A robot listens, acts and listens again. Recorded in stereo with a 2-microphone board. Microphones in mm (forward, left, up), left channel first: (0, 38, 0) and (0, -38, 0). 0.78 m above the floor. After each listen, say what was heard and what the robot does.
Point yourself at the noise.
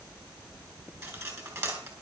The cutlery clinking: about 40° right or 140° right. Turn 40° right.
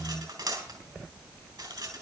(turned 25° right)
So it is at 115° right. Turn 115° right.
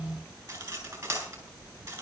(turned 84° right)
The cutlery clinking is now 30° right. Turn 30° right.
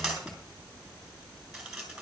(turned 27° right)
Facing the cutlery clinking.